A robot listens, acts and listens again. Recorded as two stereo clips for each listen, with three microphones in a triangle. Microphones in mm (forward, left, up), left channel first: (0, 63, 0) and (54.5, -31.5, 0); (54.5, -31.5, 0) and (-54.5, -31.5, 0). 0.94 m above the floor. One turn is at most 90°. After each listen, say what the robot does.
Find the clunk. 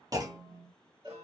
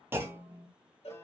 Turn 90° right.
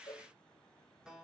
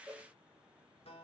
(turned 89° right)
Turn 25° right.
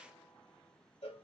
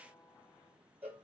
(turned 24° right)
Facing where the clunk came from. I can't hear it now.